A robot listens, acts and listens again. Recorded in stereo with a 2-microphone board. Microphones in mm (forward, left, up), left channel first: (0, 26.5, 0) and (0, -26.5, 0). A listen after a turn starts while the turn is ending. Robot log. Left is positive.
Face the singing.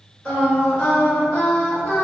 note: The singing: about 25° left or 155° left.
cmd yaw +25
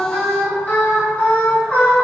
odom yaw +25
note: The singing: about 30° left or 150° left.
cmd yaw +30
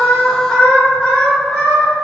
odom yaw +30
end: Facing the singing, 1 to 2 m away.